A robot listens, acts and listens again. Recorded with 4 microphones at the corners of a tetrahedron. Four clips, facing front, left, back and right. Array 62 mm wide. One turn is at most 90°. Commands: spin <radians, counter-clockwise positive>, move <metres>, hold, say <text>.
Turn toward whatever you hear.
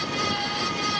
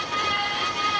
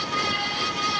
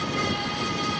hold
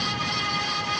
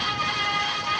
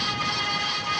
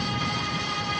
hold
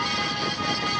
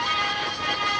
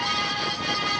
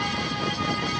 say I can't make out anything to turn to.